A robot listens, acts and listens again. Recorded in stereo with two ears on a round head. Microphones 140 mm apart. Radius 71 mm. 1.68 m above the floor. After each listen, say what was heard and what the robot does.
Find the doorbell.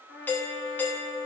Turn 30° left.
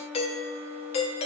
So it is at 140° left. Turn 140° left.
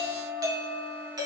The doorbell is now 25° right. Turn 25° right.
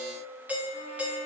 The doorbell is now 10° right. Turn 10° right.
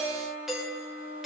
Facing the doorbell.